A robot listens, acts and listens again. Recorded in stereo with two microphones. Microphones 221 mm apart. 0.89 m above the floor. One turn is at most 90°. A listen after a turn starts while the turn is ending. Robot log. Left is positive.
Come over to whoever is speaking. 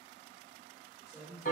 cmd yaw -30
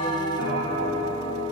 cmd idle
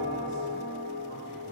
cmd idle
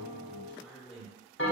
note: So it is at 15° left.
cmd yaw +15
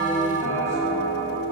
cmd idle
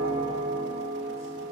cmd idle
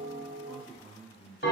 cmd fwd 1.0
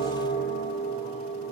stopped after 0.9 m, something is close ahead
cmd idle
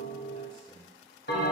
end: Arrived at the man speaking, straight ahead.